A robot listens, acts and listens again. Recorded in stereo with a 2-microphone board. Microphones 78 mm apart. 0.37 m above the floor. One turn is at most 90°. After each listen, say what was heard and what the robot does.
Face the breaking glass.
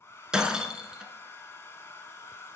Turn 30° right.
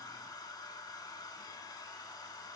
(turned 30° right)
Keep listening.
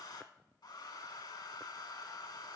I heard breaking glass, but can't make it out now. It was about 20° left or 140° right.